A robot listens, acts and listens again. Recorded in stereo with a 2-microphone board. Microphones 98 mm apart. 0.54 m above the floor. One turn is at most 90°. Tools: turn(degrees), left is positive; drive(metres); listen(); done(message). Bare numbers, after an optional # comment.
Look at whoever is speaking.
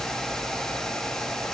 listen()
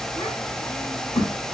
# The child speaking: about 65° left or 115° left.
turn(65)
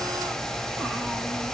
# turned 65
listen()
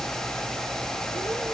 listen()
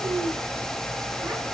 done("I heard a child speaking, but can't make it out now. It was about straight ahead or 50° left.")